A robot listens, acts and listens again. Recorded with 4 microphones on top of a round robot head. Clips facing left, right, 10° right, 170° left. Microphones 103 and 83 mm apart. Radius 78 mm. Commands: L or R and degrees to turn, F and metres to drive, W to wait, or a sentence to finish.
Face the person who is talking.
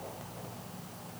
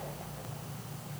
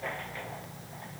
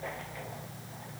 W
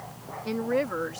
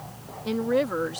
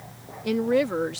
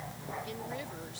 R10
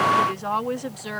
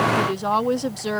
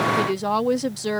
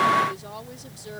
R25
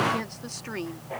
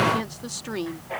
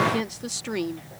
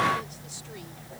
R10
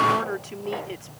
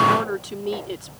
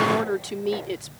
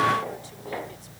R15
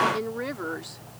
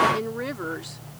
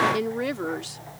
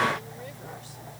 Found it: a woman speaking, straight ahead.